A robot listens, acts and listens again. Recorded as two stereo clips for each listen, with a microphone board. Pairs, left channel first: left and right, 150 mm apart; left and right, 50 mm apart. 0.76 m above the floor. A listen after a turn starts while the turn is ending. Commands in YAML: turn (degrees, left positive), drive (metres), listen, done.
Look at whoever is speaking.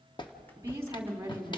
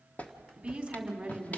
turn: -20
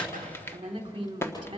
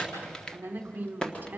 turn: -145
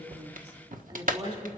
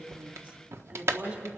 turn: -35
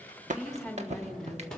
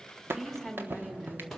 done: "Facing the woman speaking, 2 to 4 m away."